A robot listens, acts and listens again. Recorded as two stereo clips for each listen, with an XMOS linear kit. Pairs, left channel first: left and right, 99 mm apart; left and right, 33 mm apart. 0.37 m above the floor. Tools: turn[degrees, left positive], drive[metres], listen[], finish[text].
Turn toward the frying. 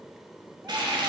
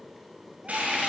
Thought: The frying: about 50° right or 130° right.
Action: turn[-50]
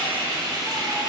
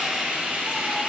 Thought: So it is at 60° right.
Action: turn[-60]
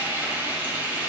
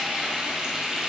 Thought: The frying is now 25° right.
Action: turn[-25]
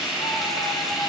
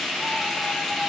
Action: finish[Found it: frying, straight ahead.]